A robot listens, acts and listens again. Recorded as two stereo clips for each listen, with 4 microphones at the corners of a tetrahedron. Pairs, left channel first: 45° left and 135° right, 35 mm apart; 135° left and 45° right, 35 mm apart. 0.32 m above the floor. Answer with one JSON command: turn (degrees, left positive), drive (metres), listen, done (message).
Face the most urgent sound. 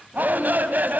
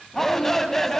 {"turn": -145}
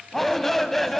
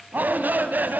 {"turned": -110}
{"turn": -35}
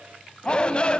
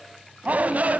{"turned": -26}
{"turn": -10}
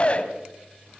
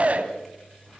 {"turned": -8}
{"done": "Facing the shout, 2 to 4 m away."}